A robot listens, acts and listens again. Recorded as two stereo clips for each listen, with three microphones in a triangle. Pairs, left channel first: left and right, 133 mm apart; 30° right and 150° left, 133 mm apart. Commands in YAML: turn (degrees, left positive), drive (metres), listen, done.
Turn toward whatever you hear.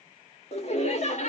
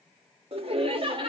turn: 105
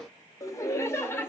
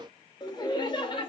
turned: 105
turn: 20
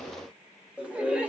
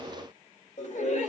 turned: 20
turn: -10
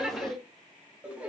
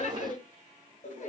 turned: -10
turn: -10
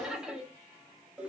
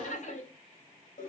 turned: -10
turn: -10
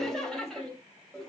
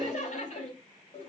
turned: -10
done: "Facing the laughter."